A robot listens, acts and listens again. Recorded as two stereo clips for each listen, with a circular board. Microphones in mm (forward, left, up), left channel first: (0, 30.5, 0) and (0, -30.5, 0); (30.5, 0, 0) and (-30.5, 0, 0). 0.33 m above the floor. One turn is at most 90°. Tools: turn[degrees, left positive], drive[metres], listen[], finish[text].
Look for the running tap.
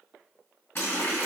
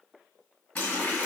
Thought: The running tap: 50° left.
Action: turn[50]
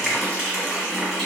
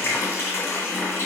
Action: finish[Facing the running tap, 1 to 2 m away.]